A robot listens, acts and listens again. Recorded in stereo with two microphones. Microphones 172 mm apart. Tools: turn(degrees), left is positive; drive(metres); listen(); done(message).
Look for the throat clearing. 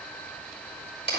listen()
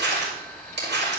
listen()
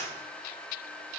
done("I can't make out throat clearing, only crumpling.")